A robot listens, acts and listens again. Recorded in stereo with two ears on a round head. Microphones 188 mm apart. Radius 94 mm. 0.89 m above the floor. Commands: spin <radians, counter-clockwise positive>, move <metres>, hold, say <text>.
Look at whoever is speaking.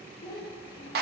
spin 0.44
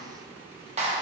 hold
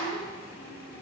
hold
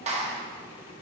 say I heard a child speaking, but can't make it out now. It was about straight ahead or 130° left.